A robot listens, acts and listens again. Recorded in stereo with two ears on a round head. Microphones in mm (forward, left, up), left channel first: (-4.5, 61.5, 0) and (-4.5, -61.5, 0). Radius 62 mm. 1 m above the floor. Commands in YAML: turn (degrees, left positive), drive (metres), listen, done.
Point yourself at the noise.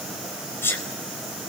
turn: 20
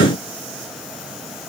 listen: true
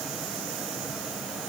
done: "I heard a sneeze, but can't make it out now. It was about straight ahead or 140° left."